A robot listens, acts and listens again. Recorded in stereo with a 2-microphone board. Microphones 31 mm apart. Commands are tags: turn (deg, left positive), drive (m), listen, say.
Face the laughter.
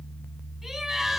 <turn deg="30"/>
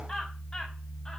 <listen/>
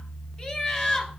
<turn deg="150"/>
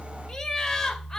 <turn deg="10"/>
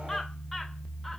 <listen/>
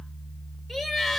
<say>Found it: laughter, straight ahead, 2 to 4 m away.</say>